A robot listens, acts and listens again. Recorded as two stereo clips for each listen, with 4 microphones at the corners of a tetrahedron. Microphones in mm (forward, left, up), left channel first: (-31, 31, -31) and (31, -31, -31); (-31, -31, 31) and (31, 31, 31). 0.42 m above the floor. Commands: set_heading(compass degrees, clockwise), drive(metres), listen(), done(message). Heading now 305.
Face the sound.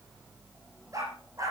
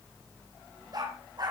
done("Found it: a dog barking, straight ahead, over 4 m away.")